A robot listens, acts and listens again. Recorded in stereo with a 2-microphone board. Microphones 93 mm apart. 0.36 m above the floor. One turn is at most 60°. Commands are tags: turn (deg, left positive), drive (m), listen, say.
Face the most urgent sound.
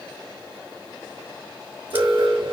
<turn deg="-60"/>
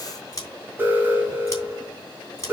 <turn deg="-25"/>
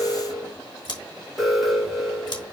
<say>Found it: an alarm, straight ahead, 2 to 4 m away.</say>